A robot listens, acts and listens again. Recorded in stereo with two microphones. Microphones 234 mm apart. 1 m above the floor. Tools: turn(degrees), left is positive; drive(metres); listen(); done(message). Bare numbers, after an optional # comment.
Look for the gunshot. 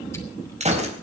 # The gunshot: about 30° right or 150° right.
turn(-30)
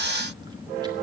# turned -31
listen()
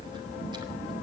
done("I heard a gunshot, but can't make it out now. It was about 5° left or 120° right.")